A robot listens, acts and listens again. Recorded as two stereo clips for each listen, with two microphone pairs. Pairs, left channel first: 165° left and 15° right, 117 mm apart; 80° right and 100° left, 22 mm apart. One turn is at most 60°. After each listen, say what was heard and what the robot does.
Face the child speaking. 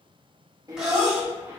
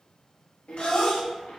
The child speaking: 80° right. Turn 60° right.
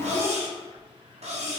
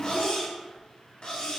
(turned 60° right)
The child speaking is now 25° right. Turn 25° right.
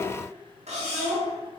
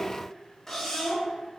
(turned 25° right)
The child speaking is now 20° right. Turn 20° right.
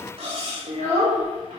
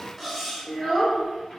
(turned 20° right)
The child speaking is now 10° right. Turn 10° right.
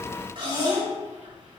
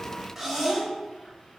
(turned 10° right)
Found it: a child speaking, straight ahead, 2 to 4 m away.